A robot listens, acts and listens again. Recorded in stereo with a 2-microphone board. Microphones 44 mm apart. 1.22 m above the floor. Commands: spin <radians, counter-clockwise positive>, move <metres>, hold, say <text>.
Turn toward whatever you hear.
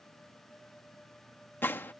spin 0.96
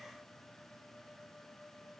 hold
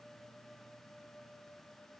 say I heard a gunshot, but can't make it out now. It was about straight ahead or 70° left.